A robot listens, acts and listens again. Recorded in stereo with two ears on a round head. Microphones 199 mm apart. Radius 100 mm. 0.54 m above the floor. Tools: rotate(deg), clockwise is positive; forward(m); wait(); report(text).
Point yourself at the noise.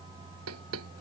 rotate(70)
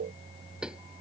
report("Found it: knocking, straight ahead.")